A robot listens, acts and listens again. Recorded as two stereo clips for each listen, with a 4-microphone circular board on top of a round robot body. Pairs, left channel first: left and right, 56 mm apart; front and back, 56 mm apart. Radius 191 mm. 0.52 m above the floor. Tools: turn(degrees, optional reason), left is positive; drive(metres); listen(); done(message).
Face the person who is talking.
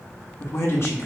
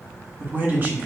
turn(degrees=125, reason="The man speaking: 125° left.")
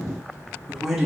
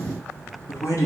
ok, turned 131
done("Facing the man speaking, 1 to 2 m away.")